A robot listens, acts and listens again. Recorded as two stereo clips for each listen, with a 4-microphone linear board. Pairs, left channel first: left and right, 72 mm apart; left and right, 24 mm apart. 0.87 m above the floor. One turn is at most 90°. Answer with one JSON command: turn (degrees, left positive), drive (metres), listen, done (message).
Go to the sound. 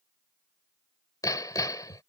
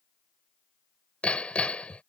{"turn": 60}
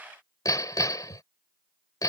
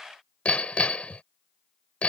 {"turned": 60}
{"turn": 60}
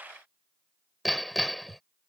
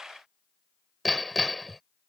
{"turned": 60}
{"drive": 1.0}
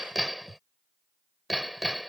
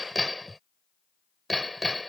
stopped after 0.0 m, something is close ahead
{"done": "Blocked. The hammering is further on, straight ahead."}